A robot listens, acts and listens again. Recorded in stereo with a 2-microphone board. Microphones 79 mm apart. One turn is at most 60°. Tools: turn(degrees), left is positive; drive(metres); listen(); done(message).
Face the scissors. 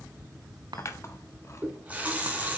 turn(degrees=40)
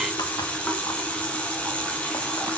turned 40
listen()
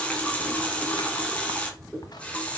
listen()
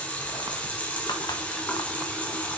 done("I heard scissors, but can't make it out now. It was about straight ahead or 100° left.")